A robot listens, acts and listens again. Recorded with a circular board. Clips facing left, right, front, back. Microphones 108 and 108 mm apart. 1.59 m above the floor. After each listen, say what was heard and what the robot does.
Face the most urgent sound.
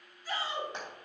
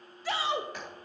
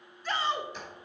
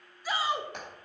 The shout: 100° right. Turn 100° right.
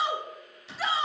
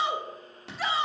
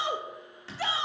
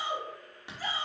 Found it: a shout, straight ahead, under 1 m away.